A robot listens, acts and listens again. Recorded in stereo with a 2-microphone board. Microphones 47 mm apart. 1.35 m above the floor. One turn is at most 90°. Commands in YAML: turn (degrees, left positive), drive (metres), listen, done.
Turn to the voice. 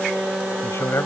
turn: 70
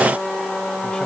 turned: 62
listen: true
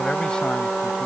turn: 20
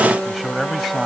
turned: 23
done: "Found it: a man speaking, straight ahead."